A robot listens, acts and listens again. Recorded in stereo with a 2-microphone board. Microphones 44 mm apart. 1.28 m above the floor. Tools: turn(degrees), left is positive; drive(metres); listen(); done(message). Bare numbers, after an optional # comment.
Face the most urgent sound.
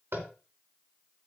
listen()
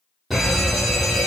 turn(30)
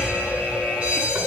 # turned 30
# So it is at 30° right.
turn(-30)
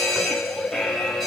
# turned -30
done("Found it: a fire alarm, straight ahead.")